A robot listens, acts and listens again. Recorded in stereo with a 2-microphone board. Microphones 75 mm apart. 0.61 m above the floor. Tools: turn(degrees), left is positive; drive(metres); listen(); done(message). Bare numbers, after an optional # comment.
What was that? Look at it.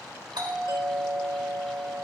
# The doorbell: about 65° right or 115° right.
turn(-65)
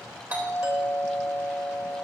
# So it is at 30° right.
turn(-30)
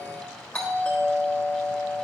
# The doorbell is now 15° left.
turn(15)
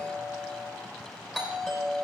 done("Found it: a doorbell, straight ahead, 2 to 4 m away.")